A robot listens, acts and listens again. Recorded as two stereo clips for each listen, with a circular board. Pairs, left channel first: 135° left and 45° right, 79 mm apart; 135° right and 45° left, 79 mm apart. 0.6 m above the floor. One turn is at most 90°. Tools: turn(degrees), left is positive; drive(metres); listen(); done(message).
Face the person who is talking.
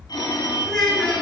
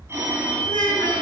turn(degrees=-90)
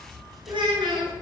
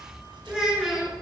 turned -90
turn(degrees=-35)
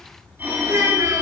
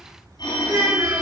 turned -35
done("Found it: a child speaking, straight ahead.")